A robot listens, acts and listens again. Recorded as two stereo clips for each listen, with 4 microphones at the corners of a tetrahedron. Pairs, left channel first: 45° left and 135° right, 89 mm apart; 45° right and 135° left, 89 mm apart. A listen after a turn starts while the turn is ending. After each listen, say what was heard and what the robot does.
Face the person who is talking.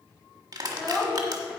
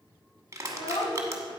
The child speaking: 45° right. Turn 45° right.
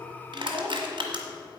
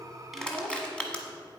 Facing the child speaking, 1 to 2 m away.